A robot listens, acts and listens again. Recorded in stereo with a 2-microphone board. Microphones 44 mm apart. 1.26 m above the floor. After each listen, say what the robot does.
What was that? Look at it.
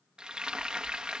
Turn 20° right.
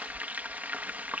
Turn 140° right.
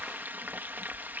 Turn 50° right.
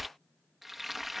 Found it: frying, straight ahead.